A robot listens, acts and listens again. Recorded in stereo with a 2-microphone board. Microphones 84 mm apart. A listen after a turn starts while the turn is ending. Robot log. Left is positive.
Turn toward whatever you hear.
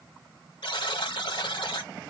cmd yaw +90
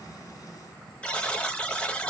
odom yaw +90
note: So it is at 15° left.
cmd yaw +15
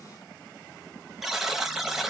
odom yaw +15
end: Facing the buzzer, under 1 m away.